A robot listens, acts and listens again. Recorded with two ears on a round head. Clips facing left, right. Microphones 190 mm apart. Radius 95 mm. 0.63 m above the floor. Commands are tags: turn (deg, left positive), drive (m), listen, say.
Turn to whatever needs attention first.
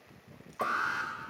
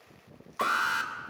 <turn deg="-65"/>
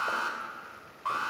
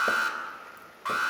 <turn deg="-25"/>
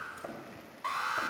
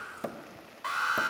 <say>Facing the alarm.</say>